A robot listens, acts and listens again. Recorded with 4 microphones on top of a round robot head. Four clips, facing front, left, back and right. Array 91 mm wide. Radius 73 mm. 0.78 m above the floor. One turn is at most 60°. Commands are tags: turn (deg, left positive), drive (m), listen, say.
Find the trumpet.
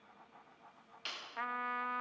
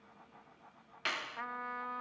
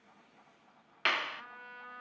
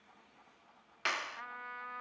<turn deg="10"/>
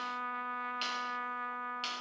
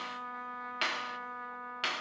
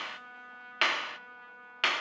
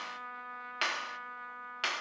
<say>Facing the trumpet.</say>